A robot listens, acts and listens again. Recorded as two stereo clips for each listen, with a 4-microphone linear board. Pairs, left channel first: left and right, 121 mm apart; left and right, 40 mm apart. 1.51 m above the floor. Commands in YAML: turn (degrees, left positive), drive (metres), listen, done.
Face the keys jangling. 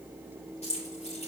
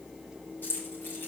turn: 60
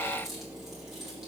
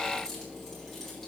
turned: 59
done: "Facing the keys jangling, 2 to 4 m away."